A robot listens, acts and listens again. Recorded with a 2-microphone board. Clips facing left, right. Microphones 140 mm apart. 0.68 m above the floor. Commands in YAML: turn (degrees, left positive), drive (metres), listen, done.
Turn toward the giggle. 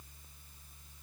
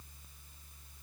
listen: true
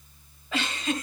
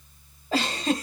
turn: -40
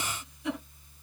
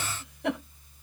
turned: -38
turn: -100
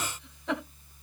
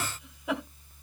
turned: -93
turn: -10
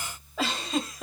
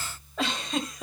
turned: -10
done: "Found it: a giggle, straight ahead."